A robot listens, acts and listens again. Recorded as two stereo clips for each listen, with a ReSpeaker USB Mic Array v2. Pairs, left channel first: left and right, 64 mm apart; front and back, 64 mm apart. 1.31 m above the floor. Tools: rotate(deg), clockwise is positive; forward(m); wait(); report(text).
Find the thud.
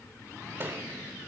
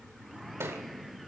rotate(140)
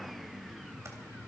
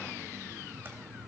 report("I heard a thud from this way, but can't make it out now.")